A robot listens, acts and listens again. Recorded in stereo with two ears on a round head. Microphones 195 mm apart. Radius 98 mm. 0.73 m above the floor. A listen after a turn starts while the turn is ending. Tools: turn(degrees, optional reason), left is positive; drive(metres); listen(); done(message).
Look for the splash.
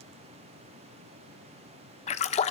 turn(degrees=30, reason="The splash: about 30° left or 150° left.")
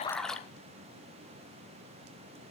done("Facing the splash, 1 to 2 m away.")